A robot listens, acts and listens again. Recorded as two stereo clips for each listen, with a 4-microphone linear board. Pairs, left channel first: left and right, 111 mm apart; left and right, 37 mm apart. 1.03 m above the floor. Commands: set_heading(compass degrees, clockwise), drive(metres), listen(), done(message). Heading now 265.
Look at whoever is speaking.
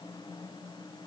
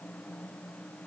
listen()
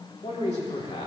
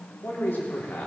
set_heading(175)
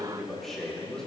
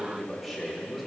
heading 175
done("Facing the man speaking, 2 to 4 m away.")